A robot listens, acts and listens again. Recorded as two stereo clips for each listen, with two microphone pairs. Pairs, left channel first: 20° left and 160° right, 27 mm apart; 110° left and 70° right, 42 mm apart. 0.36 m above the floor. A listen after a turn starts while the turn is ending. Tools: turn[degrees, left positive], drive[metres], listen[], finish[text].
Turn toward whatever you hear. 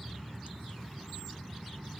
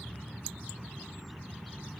Action: listen[]
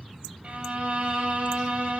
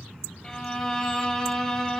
Thought: The violin: 175° right.
Action: turn[-175]
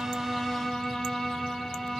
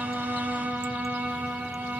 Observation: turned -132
Thought: The violin is now 45° right.
Action: turn[-45]
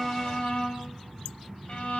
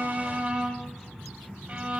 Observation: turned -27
Thought: The violin is now 20° right.
Action: turn[-20]
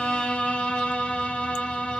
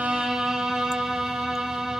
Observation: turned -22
Action: finish[Facing the violin, 1 to 2 m away.]